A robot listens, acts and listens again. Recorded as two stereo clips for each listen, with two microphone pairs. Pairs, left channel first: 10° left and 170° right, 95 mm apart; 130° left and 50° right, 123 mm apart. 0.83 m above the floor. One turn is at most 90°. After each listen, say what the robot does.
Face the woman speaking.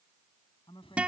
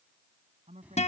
Turn 25° right.
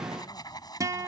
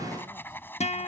Keep listening.
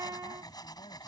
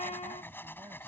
Keep listening.
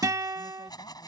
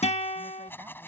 I heard a woman speaking from this way, but can't make it out now.